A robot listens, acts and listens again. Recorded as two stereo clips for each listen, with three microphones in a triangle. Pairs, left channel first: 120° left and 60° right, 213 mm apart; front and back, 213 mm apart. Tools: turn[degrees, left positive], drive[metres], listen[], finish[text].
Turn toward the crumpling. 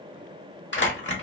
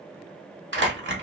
Thought: The crumpling: 150° left.
Action: turn[150]
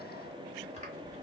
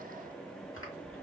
Action: listen[]
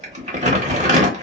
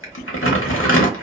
Action: finish[Facing the crumpling.]